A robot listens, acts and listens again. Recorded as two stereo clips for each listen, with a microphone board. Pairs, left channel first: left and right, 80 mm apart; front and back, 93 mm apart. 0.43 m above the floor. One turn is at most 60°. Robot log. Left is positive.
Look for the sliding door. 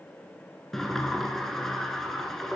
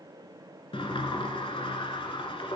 end: Found it: a sliding door, straight ahead.